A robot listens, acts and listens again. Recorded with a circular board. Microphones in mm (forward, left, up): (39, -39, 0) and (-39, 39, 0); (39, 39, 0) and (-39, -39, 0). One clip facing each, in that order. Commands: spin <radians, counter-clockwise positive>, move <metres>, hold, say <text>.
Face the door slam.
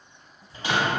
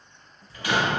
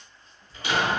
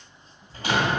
spin -1.92
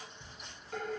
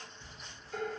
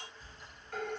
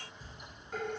say I heard a door slam from this way, but can't make it out now.